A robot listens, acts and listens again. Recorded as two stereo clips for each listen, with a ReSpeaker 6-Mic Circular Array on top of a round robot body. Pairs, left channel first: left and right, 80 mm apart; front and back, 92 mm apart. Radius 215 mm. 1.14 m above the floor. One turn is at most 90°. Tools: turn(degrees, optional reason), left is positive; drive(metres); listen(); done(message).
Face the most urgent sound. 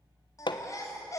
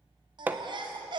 turn(degrees=90, reason="The baby crying: 140° left.")
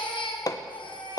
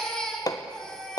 turn(degrees=85, reason="The baby crying is now 85° left.")
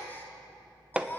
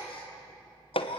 turn(degrees=20, reason="The baby crying is now 20° left.")
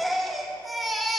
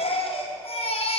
done("Found it: a baby crying, straight ahead, 2 to 4 m away.")